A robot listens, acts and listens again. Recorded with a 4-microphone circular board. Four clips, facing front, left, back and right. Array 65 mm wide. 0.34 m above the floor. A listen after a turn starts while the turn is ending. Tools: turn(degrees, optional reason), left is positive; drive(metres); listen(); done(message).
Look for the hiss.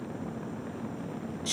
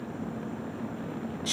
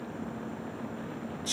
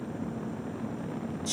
listen()
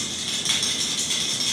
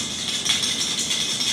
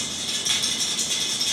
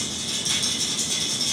listen()
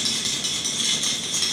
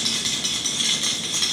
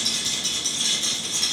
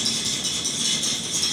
done("I can't make out a hiss to turn to.")